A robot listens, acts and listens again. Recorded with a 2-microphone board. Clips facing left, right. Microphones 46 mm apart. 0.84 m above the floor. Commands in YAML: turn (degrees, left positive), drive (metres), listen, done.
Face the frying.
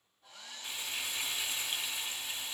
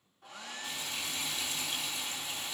turn: 30
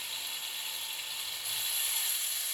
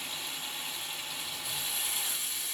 done: "Facing the frying."